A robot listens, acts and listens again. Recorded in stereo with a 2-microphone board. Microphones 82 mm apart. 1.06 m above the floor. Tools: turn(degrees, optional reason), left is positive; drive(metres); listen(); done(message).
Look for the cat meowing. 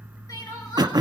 listen()
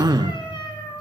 turn(degrees=90)
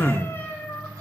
turn(degrees=25, reason="So it is at 25° left.")
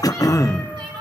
listen()
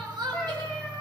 turn(degrees=10, reason="The cat meowing is now 10° left.")
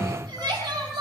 listen()
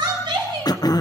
listen()
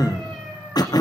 done("Facing where the cat meowing came from. I can't hear it now.")